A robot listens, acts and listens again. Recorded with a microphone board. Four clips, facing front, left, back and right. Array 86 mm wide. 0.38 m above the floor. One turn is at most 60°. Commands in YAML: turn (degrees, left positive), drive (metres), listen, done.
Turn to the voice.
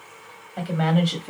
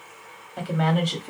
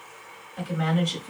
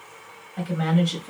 turn: 35
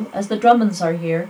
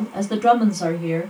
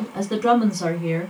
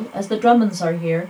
turn: -25
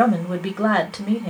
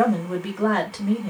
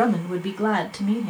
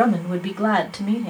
turn: -25
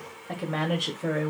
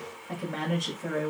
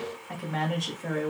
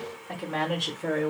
turn: -25
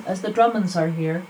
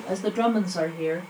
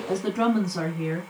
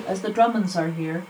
turn: -15
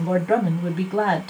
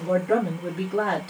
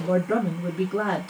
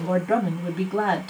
done: "Found it: a woman speaking, straight ahead."